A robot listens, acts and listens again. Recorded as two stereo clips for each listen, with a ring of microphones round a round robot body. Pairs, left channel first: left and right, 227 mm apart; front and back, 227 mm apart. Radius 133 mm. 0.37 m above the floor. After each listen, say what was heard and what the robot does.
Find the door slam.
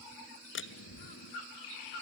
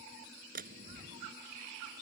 The door slam: 125° left. Turn 125° left.
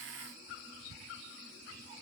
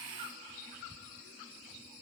I heard a door slam from this way, but can't make it out now.